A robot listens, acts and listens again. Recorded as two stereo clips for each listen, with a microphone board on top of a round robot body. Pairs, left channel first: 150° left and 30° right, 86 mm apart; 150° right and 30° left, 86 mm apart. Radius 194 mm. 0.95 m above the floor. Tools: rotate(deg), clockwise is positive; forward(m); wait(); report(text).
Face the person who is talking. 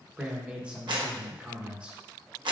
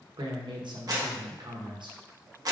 rotate(-45)
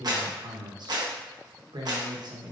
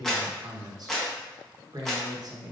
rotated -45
report("Facing the man speaking.")